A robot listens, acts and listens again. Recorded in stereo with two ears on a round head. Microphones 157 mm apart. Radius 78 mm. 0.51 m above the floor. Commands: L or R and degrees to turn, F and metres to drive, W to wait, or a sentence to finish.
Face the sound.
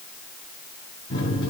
L25
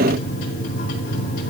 L130
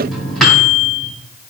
Found it: a microwave, straight ahead, 2 to 4 m away.